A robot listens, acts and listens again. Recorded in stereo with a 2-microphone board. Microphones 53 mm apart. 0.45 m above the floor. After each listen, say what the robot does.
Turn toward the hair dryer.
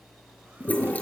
Keep listening.
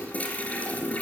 Keep listening.
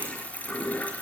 I can't make out a hair dryer to turn to.